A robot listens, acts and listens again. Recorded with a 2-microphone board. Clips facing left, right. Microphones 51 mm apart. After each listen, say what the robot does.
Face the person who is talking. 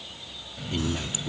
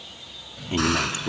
Turn 40° right.
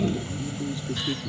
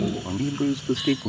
Turn 100° right.
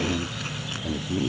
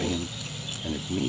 Found it: a man speaking, straight ahead.